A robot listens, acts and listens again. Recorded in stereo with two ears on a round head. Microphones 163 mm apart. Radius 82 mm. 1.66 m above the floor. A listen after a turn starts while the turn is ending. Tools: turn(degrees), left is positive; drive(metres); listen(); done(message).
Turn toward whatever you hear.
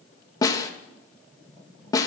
turn(degrees=20)
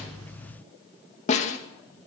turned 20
turn(degrees=140)
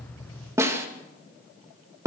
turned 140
turn(degrees=-15)
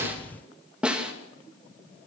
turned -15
done("Found it: a snare drum, straight ahead.")